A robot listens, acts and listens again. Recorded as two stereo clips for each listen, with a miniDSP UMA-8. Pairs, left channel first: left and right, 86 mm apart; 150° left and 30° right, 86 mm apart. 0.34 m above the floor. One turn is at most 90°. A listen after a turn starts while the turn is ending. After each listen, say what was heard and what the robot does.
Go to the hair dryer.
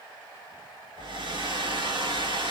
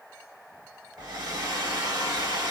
The hair dryer: 75° right. Turn 75° right.
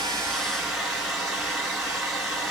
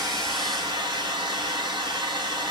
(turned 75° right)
Drive 1.0 m forward.
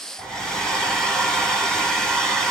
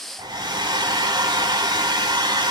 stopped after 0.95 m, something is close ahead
I am next to the hair dryer.